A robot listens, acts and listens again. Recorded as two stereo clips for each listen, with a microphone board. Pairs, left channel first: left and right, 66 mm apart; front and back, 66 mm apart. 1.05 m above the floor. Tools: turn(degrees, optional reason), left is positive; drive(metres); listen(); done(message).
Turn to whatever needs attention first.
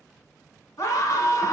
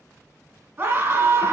turn(degrees=130, reason="The scream: 130° left.")
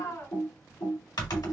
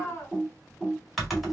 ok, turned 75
turn(degrees=55, reason="The scream is now 55° left.")
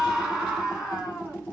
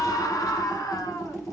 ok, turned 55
done("Found it: a scream, straight ahead.")